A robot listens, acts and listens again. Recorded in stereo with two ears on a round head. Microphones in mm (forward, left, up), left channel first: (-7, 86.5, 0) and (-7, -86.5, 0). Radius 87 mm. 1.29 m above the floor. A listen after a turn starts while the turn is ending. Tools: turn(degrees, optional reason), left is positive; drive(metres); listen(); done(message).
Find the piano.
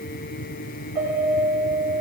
turn(degrees=-30, reason="The piano: about 30° right or 150° right.")
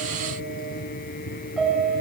done("Facing the piano.")